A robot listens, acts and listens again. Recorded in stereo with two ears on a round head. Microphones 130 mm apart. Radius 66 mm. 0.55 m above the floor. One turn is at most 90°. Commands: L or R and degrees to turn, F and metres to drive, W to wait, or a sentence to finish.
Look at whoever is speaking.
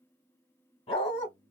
L45
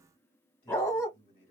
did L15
L90
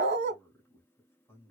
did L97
L15
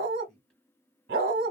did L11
Found it: a man speaking, straight ahead.